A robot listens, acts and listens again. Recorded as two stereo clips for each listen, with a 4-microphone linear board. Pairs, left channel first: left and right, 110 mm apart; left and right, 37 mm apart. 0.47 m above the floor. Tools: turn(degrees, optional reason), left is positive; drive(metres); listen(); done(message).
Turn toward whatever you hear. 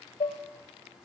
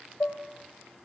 turn(degrees=70, reason="The dishes clattering: about 70° left or 110° left.")
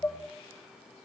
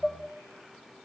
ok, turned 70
turn(degrees=20, reason="So it is at 20° left.")
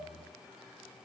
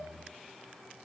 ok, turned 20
listen()
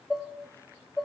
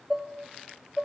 done("Found it: dishes clattering, straight ahead.")